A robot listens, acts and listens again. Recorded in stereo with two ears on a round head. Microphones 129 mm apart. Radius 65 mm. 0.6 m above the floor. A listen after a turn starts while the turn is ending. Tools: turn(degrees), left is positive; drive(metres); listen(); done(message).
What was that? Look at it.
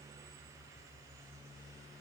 listen()
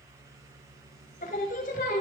turn(degrees=65)
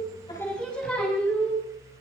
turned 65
turn(degrees=10)
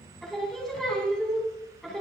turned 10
done("Facing the singing, over 4 m away.")